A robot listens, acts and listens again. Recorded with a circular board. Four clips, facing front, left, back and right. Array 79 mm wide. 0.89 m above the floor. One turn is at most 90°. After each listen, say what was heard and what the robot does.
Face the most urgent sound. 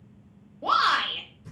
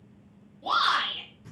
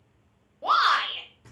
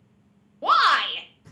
The shout: 100° right. Turn 90° right.
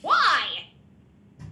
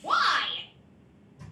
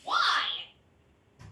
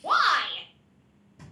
The shout is now 10° right. Turn 10° right.
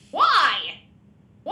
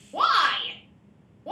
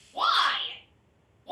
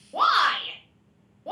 Facing the shout, under 1 m away.